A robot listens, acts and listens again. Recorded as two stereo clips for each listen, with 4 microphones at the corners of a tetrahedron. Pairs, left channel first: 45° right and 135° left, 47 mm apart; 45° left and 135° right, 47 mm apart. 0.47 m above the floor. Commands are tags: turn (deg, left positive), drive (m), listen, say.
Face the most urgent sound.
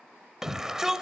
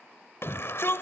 <turn deg="55"/>
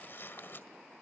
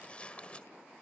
<listen/>
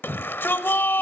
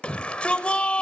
<turn deg="-15"/>
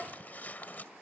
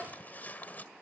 <listen/>
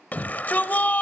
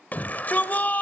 <say>Found it: a shout, straight ahead, 1 to 2 m away.</say>